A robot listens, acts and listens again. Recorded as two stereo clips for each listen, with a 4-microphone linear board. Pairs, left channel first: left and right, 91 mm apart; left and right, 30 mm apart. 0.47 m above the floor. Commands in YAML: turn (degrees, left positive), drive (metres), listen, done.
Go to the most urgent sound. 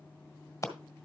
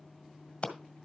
listen: true
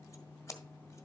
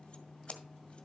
listen: true
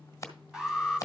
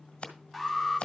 turn: -30
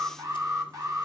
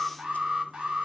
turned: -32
turn: -140
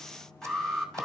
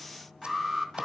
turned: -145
drive: 1.0
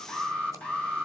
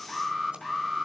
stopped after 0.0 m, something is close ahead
turn: 10
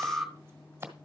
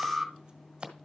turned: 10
done: "Blocked. The alarm is further on, straight ahead."